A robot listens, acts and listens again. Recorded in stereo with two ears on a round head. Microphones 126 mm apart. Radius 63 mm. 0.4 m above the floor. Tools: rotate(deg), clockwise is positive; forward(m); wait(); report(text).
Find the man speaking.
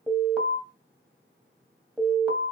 wait()
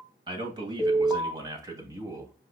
rotate(20)
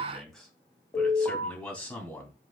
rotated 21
rotate(-10)
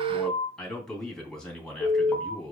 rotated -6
report("Found it: a man speaking, straight ahead, 2 to 4 m away.")